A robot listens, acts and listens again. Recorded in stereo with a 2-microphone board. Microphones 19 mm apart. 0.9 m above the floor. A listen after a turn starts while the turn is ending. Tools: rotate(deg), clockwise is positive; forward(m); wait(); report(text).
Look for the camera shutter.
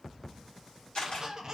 rotate(-60)
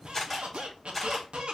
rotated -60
report("Facing the camera shutter, 1 to 2 m away.")